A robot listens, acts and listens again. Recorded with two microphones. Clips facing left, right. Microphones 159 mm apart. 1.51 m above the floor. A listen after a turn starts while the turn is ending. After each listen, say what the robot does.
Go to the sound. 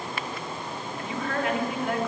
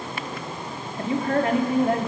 Turn 35° right.
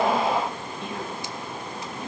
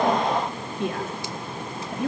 Turn 110° right.
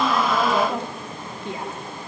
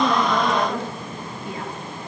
Turn 25° left.
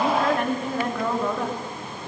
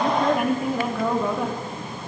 Drive 1.0 m forward.
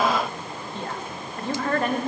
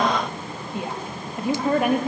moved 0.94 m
Turn 10° right.
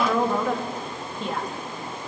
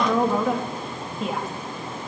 Drive 1.0 m forward.
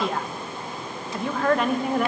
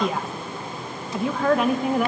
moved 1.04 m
Drive 1.0 m forward.
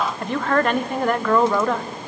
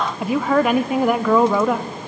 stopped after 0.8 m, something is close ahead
Arrived at the woman speaking, straight ahead.